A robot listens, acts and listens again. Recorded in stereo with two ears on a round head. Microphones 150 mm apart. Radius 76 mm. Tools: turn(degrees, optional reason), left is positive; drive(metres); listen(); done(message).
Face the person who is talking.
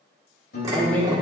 turn(degrees=30)
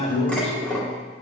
turn(degrees=140, reason="So it is at 140° left.")
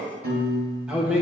done("Found it: a man speaking, straight ahead.")